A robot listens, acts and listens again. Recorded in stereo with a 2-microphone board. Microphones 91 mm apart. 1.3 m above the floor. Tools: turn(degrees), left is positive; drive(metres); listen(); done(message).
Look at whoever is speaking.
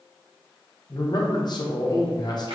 turn(degrees=50)
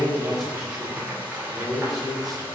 done("Found it: a man speaking, straight ahead.")